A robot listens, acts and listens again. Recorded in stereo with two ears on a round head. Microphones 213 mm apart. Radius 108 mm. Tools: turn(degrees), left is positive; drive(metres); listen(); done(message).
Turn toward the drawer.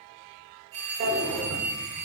turn(degrees=-40)
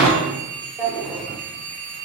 done("Facing the drawer, under 1 m away.")